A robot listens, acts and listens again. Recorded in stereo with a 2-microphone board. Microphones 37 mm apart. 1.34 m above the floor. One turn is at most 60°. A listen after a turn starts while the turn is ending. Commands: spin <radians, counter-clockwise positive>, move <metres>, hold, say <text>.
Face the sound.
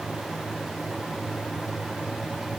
hold
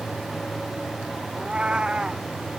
spin -0.44
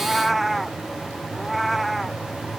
say Facing the cat meowing.